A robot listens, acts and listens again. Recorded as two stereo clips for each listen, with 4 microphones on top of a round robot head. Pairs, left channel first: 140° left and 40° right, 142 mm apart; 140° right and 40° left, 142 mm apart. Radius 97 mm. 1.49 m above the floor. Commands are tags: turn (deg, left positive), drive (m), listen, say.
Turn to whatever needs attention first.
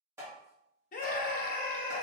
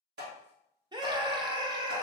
<turn deg="105"/>
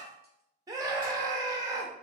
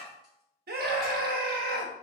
<turn deg="25"/>
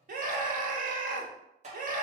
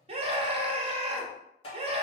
<turn deg="-10"/>
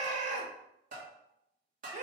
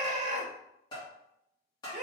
<say>Facing the scream.</say>